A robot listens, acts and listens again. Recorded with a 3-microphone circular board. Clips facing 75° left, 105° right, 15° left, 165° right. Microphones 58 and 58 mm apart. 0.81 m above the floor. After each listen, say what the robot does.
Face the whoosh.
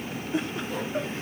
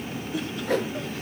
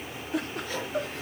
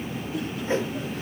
Turn 100° right.
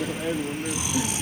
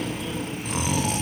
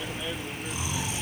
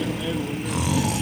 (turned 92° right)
Turn 10° right.
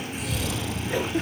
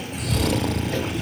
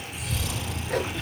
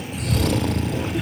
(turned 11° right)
Keep listening.
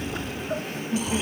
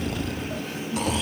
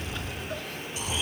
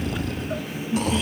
I heard a whoosh from this way, but can't make it out now.